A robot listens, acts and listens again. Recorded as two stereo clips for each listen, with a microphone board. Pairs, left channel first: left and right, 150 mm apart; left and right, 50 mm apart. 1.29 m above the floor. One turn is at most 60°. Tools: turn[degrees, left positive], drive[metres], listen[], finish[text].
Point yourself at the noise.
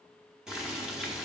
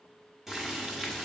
Action: turn[-30]
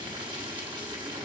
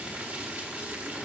Thought: So it is at 140° right.
Action: turn[-60]
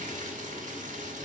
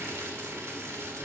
Thought: The boiling is now 75° right.
Action: turn[-60]
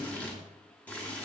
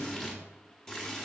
Thought: The boiling is now 10° left.
Action: turn[10]
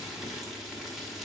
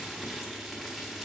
Action: finish[Facing the boiling, 1 to 2 m away.]